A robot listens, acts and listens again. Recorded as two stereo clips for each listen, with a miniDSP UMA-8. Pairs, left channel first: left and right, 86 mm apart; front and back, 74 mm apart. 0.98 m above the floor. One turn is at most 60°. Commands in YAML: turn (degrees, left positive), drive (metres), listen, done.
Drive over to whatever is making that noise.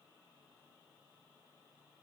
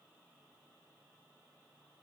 listen: true
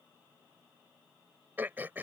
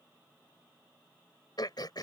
turn: -20
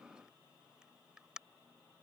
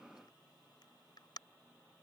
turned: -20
turn: -10
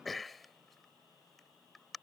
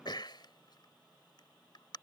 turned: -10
drive: 1.0
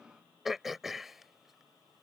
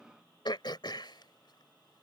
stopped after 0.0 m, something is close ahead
done: "Blocked. The throat clearing is further on, straight ahead."